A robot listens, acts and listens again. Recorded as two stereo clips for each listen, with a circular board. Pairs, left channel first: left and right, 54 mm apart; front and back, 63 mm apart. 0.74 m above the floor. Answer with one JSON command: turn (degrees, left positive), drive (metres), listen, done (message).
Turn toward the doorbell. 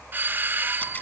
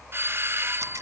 {"turn": -135}
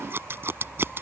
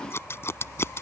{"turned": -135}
{"listen": true}
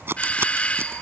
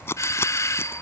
{"turn": 25}
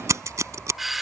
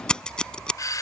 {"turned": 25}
{"done": "Found it: a doorbell, straight ahead."}